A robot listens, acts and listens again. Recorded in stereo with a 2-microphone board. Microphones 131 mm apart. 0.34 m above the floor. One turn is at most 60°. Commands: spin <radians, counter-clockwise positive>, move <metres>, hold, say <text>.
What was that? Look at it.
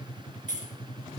spin 1.05
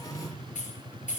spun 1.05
spin 1.05
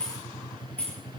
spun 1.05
spin 0.17
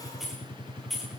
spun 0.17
say Found it: keys jangling, straight ahead.